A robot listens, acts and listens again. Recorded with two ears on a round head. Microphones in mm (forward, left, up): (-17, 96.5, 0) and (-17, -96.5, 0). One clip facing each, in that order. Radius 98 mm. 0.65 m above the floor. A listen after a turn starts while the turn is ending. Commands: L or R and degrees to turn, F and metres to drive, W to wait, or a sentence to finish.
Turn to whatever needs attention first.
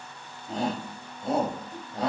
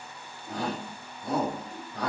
L20
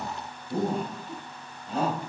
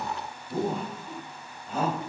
Found it: a shout, straight ahead, 2 to 4 m away.